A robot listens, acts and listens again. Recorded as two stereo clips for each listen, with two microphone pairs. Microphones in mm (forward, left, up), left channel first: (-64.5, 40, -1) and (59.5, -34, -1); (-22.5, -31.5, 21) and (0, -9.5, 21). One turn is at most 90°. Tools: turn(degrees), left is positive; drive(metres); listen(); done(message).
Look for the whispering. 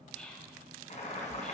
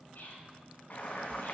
turn(degrees=-90)
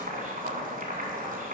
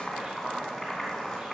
turn(degrees=-40)
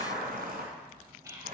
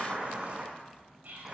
turn(degrees=35)
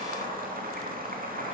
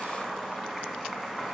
listen()
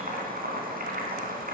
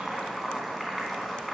listen()
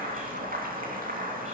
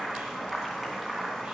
done("I heard whispering from this way, but can't make it out now.")